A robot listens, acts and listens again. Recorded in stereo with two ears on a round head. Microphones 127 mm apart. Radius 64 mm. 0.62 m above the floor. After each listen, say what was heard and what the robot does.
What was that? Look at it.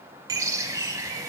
The bird: about 25° right or 155° right. Turn 25° right.
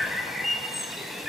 Facing the bird, under 1 m away.